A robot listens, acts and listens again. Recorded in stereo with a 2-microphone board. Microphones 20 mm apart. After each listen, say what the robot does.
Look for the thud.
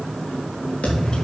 Turn 90° left.
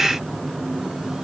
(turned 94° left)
Facing where the thud came from. I can't hear it now.